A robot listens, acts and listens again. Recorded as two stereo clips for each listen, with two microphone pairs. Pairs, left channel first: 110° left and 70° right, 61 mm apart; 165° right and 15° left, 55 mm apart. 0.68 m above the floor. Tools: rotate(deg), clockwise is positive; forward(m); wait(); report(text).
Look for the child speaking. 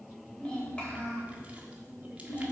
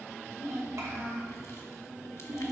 rotate(-60)
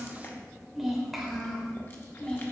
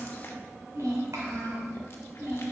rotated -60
rotate(-35)
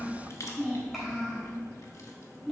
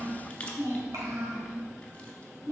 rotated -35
rotate(-25)
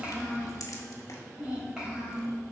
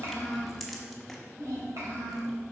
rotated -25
report("Found it: a child speaking, straight ahead.")